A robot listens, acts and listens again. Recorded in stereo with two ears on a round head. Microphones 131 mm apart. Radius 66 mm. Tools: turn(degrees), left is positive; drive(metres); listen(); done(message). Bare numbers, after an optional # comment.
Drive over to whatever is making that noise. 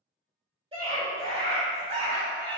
# The scream: about 40° right or 140° right.
turn(-40)
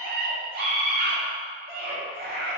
# So it is at 100° right.
turn(-100)
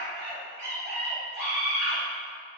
# The scream is now 20° right.
turn(-20)
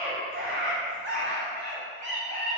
drive(1.0)
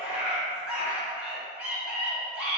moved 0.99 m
# The scream is now 10° right.
turn(-10)
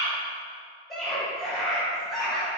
drive(1.0)
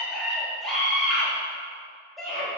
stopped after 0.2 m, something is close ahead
done("Arrived at the scream, straight ahead.")